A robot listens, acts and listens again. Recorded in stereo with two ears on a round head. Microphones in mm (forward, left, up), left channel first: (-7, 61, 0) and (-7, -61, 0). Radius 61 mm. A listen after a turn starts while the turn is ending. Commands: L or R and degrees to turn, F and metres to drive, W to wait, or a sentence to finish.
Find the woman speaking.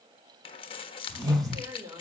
R30
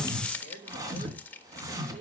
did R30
R125
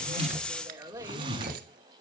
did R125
R20
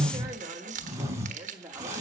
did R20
R15
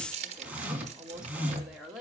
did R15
Facing the woman speaking, 2 to 4 m away.